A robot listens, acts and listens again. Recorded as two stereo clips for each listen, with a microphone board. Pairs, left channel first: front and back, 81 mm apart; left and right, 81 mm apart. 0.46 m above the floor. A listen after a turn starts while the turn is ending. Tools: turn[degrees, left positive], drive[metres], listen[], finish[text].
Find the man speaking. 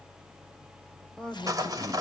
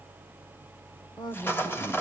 Thought: The man speaking: 80° left.
Action: turn[80]
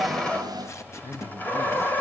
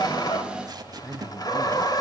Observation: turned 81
Thought: The man speaking is now 10° left.
Action: turn[10]
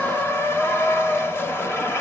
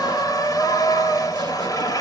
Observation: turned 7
Action: listen[]
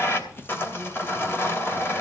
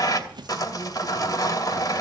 Action: listen[]
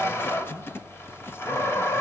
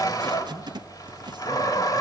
Action: finish[I heard a man speaking from this way, but can't make it out now.]